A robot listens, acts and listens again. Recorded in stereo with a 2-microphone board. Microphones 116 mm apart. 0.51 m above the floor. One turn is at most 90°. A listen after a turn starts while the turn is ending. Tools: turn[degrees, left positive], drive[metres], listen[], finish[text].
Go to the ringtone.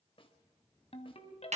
Thought: The ringtone: about 60° left or 120° left.
Action: turn[60]
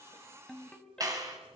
Action: drive[1.0]
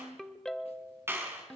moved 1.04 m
Action: drive[1.0]
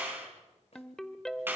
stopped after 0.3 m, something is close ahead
Action: finish[Arrived at the ringtone, straight ahead.]